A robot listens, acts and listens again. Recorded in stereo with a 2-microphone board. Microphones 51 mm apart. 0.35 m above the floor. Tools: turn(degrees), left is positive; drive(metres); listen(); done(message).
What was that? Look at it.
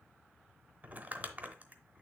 turn(degrees=-35)
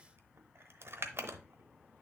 turn(degrees=-100)
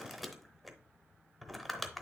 done("Found it: crumpling, straight ahead, under 1 m away.")